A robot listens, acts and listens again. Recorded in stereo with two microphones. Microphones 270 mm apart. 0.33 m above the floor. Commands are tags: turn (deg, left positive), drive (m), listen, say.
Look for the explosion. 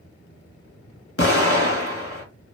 <turn deg="55"/>
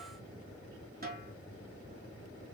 <listen/>
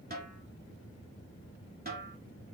<say>I heard an explosion, but can't make it out now. It was about straight ahead or 70° left.</say>